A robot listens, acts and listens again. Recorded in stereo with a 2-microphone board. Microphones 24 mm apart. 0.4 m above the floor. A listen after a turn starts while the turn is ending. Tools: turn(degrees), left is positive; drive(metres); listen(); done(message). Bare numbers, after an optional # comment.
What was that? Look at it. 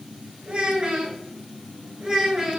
# The child speaking: about 15° right or 165° right.
turn(-15)
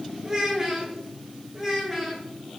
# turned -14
turn(30)
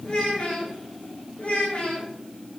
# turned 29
# So it is at 125° left.
turn(125)
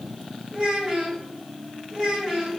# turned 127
# The child speaking is now 20° right.
turn(-20)
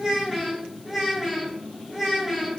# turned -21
done("Found it: a child speaking, straight ahead, 1 to 2 m away.")